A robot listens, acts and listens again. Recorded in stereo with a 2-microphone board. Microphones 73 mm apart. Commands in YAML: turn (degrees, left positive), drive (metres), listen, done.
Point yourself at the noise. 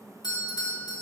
turn: 75
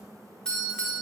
turn: 10
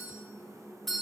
done: "Facing the doorbell, 2 to 4 m away."